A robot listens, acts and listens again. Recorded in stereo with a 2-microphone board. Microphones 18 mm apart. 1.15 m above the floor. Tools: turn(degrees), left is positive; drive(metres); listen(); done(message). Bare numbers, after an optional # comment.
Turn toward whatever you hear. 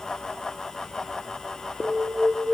# The alarm: about 45° right or 135° right.
turn(-45)
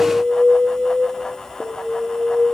# So it is at 85° right.
turn(-85)
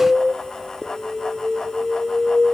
done("Found it: an alarm, straight ahead.")